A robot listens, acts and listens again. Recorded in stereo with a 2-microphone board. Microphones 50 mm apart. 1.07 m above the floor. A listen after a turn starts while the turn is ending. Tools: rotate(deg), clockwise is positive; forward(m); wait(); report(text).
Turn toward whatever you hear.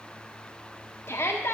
rotate(-55)
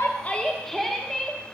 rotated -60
report("Facing the shout, 1 to 2 m away.")